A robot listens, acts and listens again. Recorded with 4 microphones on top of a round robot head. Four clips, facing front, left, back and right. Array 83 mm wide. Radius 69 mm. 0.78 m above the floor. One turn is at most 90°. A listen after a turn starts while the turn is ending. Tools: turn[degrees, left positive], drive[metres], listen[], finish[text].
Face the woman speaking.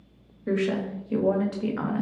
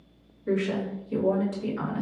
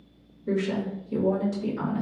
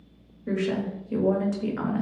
Thought: The woman speaking: 35° right.
Action: turn[-35]
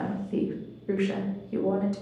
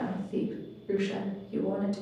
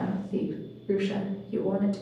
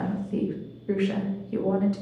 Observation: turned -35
Thought: The woman speaking is now 65° right.
Action: turn[-65]
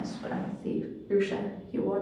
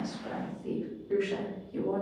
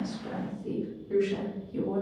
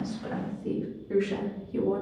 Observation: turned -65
Thought: The woman speaking is now 10° right.
Action: turn[-10]
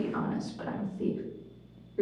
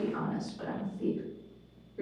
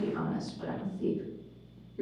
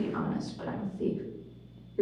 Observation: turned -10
Action: finish[Found it: a woman speaking, straight ahead, 2 to 4 m away.]